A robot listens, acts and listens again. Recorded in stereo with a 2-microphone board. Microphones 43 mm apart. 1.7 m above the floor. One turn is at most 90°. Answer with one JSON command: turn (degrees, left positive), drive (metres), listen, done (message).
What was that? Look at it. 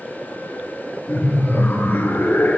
{"turn": 75}
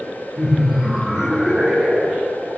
{"turn": -15}
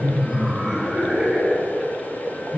{"turn": -10}
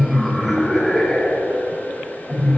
{"done": "Facing the laughter, over 4 m away."}